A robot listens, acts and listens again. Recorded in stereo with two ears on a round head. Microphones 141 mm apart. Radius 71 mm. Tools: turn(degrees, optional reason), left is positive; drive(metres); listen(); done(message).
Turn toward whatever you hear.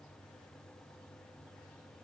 listen()
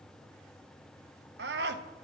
turn(degrees=-75, reason="The scream: about 75° right or 105° right.")
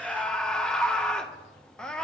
done("Found it: a scream, straight ahead.")